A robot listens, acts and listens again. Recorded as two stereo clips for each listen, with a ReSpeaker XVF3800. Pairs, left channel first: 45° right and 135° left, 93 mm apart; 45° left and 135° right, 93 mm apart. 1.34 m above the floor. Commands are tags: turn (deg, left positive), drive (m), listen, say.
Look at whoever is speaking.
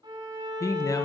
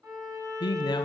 <say>Facing the man speaking.</say>